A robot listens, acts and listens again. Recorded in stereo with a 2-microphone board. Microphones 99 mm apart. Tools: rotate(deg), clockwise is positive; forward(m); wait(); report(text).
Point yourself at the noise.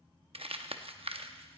rotate(70)
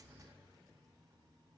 wait()
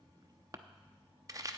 rotate(40)
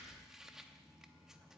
report("Facing the crumpling.")